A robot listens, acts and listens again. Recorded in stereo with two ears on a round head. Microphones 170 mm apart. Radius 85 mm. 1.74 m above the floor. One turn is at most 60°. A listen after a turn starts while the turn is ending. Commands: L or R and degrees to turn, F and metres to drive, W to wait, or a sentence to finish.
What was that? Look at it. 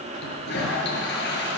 L60
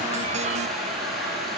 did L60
Found it: a toilet flushing, straight ahead, over 4 m away.